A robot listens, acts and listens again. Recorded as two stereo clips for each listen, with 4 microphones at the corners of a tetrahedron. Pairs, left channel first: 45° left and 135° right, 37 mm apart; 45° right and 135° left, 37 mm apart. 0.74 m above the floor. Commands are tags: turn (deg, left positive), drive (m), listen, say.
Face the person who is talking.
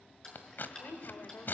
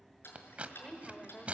<turn deg="25"/>
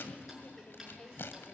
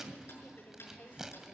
<turn deg="-10"/>
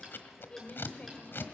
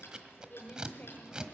<turn deg="-10"/>
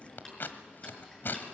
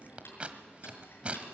<listen/>
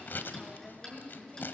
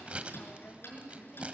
<turn deg="-20"/>
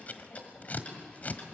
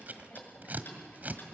<listen/>
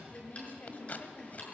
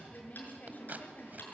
<say>Facing the woman speaking, 2 to 4 m away.</say>